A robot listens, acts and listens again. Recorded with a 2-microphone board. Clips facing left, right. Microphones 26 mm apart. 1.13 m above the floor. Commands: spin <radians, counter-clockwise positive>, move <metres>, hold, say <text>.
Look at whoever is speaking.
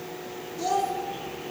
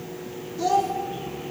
spin -0.52
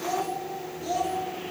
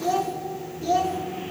spin -2.53
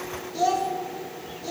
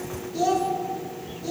spin 0.17
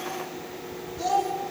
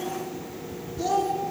say Facing the child speaking.